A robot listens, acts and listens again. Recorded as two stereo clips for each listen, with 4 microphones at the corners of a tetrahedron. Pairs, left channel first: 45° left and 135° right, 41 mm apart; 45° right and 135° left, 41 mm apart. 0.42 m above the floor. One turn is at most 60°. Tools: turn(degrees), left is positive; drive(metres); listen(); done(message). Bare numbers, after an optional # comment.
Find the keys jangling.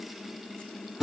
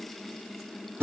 listen()
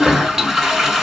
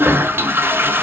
listen()
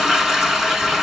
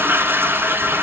done("I can't make out keys jangling to turn to.")